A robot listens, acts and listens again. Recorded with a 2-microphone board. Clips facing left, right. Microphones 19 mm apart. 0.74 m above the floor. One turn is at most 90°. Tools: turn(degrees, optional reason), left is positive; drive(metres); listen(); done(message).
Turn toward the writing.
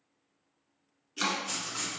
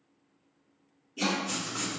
turn(degrees=20, reason="The writing: about 20° left or 160° left.")
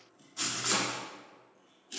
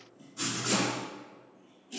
turn(degrees=90, reason="So it is at 140° left.")
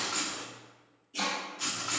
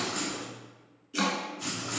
turn(degrees=55, reason="The writing is now 55° left.")
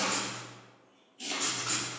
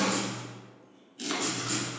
done("Found it: writing, straight ahead.")